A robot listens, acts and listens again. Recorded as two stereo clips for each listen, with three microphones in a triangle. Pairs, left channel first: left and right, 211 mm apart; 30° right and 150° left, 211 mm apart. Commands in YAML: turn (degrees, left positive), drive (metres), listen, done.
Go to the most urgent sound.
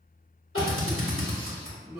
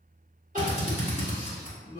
turn: 100
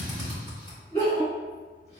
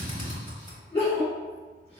turn: 30
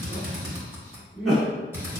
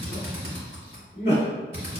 drive: 1.0
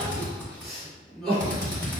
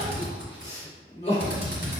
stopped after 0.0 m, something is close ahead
done: "Something is in my way. I am facing the crying but have not reached it."